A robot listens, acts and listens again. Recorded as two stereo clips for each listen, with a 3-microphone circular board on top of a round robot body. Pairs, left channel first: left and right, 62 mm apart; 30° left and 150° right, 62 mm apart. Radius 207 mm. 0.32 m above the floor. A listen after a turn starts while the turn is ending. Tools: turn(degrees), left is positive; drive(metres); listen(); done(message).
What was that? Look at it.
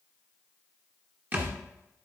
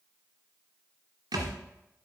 turn(degrees=-150)
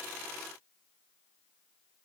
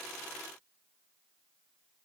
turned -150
done("Facing where the thud came from. I can't hear it now.")